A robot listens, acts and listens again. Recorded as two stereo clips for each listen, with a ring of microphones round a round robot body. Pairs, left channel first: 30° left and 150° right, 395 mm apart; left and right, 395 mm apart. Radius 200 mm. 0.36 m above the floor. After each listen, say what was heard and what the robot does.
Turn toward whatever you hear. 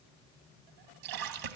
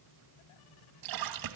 The splash: 120° right. Turn 120° right.
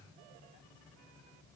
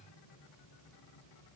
I heard a splash from this way, but can't make it out now.